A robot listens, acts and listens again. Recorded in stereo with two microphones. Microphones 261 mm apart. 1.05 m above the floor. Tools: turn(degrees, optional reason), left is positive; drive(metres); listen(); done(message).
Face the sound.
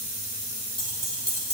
turn(degrees=-75, reason="The keys jangling: about 75° right or 105° right.")
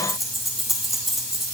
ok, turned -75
done("Facing the keys jangling, over 4 m away.")